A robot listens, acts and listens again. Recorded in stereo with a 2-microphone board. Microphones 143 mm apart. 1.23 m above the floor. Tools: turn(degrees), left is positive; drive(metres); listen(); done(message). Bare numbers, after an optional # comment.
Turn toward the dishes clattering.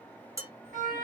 # The dishes clattering: about 25° right or 155° right.
turn(-25)
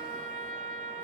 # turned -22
listen()
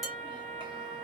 listen()
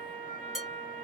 done("Found it: dishes clattering, straight ahead.")